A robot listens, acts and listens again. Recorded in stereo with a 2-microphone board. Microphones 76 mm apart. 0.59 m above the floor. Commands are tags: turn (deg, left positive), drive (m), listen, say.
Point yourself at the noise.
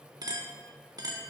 <turn deg="-55"/>
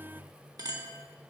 <turn deg="-60"/>
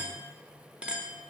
<turn deg="-15"/>
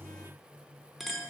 <say>Found it: a clink, straight ahead, under 1 m away.</say>